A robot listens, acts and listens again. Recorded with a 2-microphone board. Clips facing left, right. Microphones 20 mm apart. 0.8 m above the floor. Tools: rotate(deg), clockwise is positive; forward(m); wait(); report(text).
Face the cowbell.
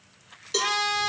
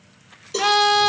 rotate(-30)
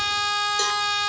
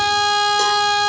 wait()
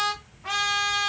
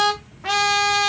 wait()
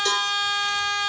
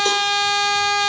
report("I heard a cowbell, but can't make it out now. It was about straight ahead or 120° left.")